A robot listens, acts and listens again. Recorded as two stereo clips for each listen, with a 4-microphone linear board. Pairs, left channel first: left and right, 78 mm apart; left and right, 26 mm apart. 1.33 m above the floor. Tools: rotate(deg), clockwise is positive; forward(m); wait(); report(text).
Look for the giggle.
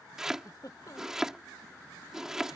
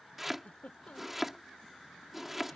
rotate(-55)
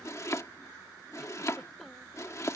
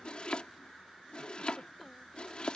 wait()
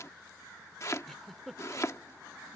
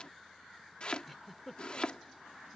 report("Found it: a giggle, straight ahead.")